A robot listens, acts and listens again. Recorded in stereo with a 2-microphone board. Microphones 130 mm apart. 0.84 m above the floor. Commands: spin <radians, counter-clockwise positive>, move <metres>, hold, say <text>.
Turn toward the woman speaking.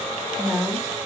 spin -0.52
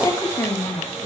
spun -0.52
spin 0.44
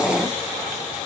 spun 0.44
hold
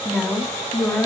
spin 0.17
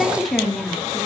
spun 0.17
say Found it: a woman speaking, straight ahead.